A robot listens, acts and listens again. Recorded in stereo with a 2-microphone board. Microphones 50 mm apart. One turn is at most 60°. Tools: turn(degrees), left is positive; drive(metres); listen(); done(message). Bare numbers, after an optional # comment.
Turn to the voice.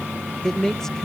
turn(30)
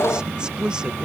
# So it is at 15° right.
turn(-15)
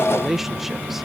done("Facing the man speaking.")